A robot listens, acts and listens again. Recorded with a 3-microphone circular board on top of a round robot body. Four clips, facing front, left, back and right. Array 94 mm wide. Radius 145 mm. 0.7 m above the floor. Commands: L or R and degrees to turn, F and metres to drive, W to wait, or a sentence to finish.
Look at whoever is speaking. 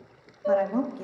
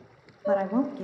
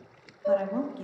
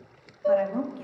L75
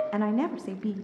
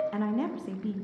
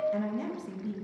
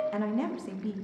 L15
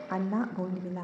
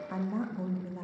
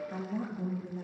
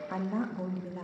Facing the woman speaking.